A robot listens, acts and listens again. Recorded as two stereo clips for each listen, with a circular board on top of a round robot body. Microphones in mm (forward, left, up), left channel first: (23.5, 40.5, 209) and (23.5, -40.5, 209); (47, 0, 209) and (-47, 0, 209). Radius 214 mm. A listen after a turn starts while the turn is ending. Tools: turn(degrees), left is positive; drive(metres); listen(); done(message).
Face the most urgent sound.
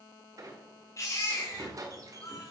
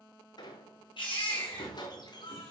turn(degrees=35)
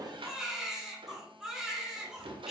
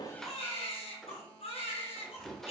done("Found it: a baby crying, straight ahead.")